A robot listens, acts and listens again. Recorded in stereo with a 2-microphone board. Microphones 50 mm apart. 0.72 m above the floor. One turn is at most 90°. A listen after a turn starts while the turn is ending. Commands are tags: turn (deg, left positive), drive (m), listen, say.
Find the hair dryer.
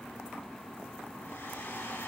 <turn deg="40"/>
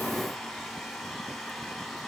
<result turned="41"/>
<say>Found it: a hair dryer, straight ahead, over 4 m away.</say>